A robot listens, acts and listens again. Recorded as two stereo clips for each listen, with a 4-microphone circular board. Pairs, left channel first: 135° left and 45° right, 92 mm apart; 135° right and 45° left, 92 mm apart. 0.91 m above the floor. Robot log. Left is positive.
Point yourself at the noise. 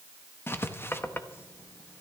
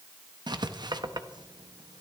note: The writing: 75° left.
cmd yaw +75
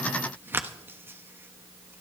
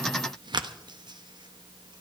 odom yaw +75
note: The writing is now 20° left.
cmd yaw +20
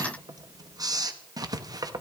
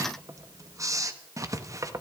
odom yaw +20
end: Found it: writing, straight ahead, 1 to 2 m away.